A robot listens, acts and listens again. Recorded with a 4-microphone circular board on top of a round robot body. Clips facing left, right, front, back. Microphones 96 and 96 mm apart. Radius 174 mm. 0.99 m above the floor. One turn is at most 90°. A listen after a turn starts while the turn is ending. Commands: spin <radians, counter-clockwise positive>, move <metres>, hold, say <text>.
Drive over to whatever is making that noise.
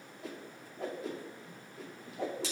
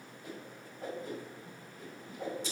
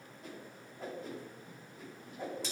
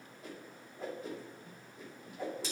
spin 1.57
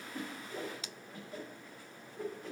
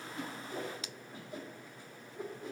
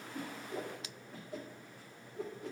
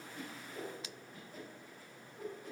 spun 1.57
spin -0.35
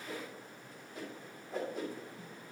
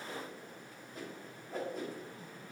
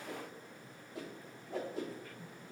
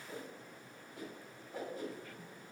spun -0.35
move 1.0
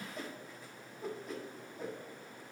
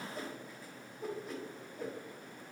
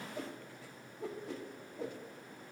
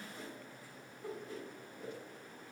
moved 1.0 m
move 1.0
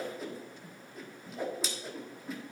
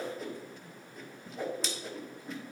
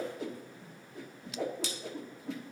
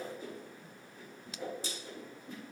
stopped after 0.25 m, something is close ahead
say Arrived at the whoosh, straight ahead.